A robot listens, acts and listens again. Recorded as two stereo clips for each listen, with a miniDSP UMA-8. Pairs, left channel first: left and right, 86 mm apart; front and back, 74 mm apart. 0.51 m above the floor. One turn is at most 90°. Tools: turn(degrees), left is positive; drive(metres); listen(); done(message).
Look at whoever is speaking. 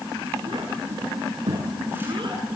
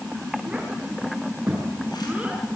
turn(degrees=-90)
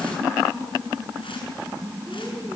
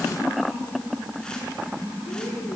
turn(degrees=-20)
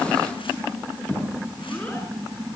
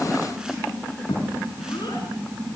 turn(degrees=15)
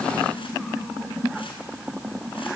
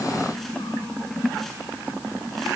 listen()
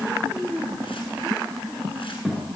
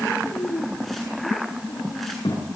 done("Facing the child speaking, over 4 m away.")